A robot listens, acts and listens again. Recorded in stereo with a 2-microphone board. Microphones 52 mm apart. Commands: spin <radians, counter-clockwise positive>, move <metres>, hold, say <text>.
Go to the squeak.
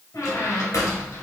spin 1.13
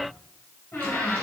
spin 0.87
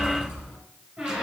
move 1.0
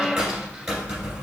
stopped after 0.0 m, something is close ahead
spin -0.17
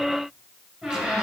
say Blocked. The squeak is further on, straight ahead.